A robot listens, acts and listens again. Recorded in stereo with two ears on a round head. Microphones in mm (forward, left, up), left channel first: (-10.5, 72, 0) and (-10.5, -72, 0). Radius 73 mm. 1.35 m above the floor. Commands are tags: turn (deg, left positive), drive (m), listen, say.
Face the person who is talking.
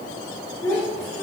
<turn deg="15"/>
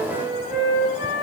<listen/>
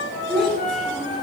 <say>Found it: a child speaking, straight ahead.</say>